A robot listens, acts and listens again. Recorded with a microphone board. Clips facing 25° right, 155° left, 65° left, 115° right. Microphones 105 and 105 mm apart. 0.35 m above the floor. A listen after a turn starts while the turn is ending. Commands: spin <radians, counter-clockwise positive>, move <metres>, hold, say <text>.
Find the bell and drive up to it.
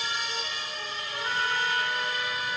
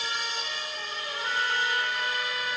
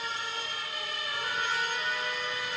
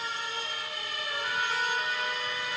hold
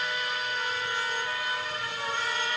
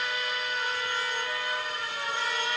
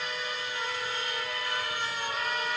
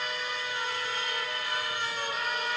hold
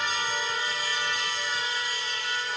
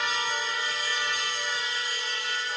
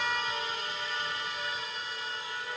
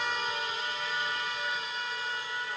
say I can't make out a bell, only a trumpet.